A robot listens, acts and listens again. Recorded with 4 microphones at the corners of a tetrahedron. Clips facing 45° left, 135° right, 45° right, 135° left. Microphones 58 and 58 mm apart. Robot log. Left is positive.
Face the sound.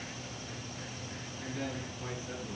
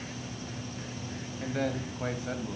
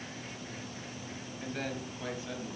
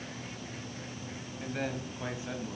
note: The man speaking: 160° right.
cmd yaw -160
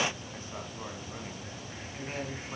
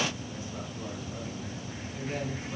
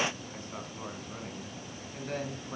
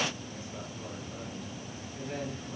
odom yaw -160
note: The man speaking is now 15° right.
cmd yaw -15
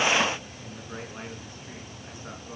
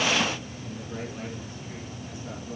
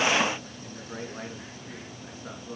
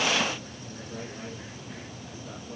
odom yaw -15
note: The man speaking is now 10° right.
cmd yaw -10
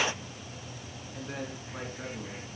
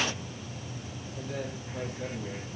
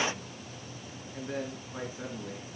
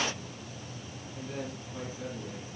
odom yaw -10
end: Found it: a man speaking, straight ahead, over 4 m away.